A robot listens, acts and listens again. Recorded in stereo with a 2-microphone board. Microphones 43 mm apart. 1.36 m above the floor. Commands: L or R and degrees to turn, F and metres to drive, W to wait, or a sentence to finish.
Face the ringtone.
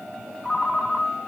L15
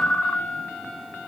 L150
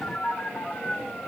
L45
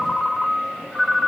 L10
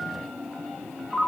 Found it: a ringtone, straight ahead.